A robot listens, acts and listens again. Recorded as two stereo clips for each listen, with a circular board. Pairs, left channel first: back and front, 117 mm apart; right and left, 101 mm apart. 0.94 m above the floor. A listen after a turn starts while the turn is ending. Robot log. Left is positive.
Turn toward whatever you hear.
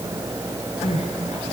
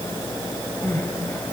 note: The crying: 160° right.
cmd yaw -160
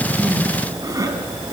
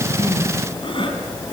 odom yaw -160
note: The crying is now 60° right.
cmd yaw -60
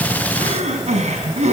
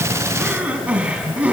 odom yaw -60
note: The crying is now 15° left.
cmd yaw +15
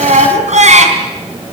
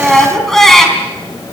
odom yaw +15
end: Found it: crying, straight ahead.